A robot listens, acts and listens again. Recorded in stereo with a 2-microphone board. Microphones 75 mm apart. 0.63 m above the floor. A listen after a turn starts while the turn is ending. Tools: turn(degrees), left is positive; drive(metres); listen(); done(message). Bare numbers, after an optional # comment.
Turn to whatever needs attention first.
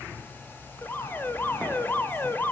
# The alarm: about 25° left or 155° left.
turn(25)
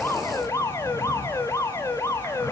# So it is at 125° left.
turn(125)
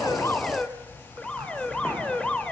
# The alarm is now 15° left.
turn(15)
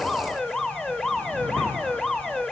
done("Found it: an alarm, straight ahead, 2 to 4 m away.")